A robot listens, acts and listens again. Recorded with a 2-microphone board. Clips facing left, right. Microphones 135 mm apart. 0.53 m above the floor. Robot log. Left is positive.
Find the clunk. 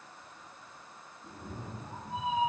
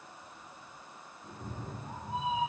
cmd idle
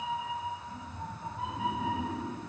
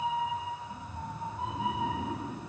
cmd idle
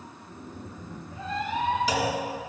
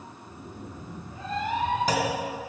note: The clunk: about 50° right or 130° right.
cmd yaw -50
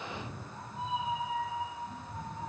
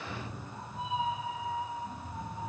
cmd idle
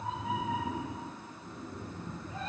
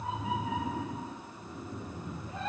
end: I heard a clunk, but can't make it out now. It was about straight ahead or 80° right.